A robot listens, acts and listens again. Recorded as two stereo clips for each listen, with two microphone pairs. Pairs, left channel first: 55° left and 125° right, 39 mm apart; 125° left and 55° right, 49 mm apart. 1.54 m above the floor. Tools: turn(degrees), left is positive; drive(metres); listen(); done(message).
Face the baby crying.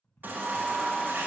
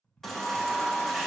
turn(degrees=-150)
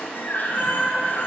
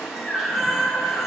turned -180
turn(degrees=25)
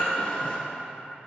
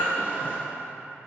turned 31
done("Found it: a baby crying, straight ahead, 1 to 2 m away.")